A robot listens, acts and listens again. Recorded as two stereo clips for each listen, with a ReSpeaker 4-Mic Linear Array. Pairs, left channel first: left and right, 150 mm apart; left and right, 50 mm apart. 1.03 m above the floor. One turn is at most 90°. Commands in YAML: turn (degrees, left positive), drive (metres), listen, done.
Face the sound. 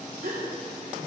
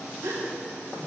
turn: -90
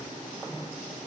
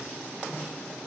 done: "I heard a gasp from this way, but can't make it out now."